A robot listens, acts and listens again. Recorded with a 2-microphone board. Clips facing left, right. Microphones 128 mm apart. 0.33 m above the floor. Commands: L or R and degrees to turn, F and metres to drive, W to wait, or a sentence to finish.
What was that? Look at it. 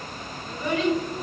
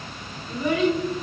R30
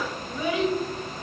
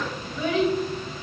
L30
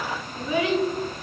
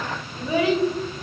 R40
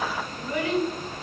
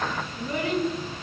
R30
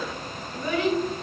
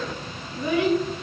R10
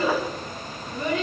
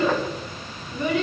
Found it: a child speaking, straight ahead, 1 to 2 m away.